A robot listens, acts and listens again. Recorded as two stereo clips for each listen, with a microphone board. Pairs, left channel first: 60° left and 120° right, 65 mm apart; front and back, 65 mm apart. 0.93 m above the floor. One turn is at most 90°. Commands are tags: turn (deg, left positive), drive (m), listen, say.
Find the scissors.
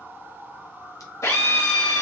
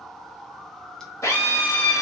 <listen/>
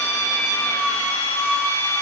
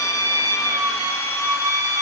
<listen/>
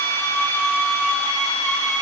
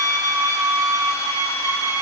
<say>I can't make out scissors, only a drill.</say>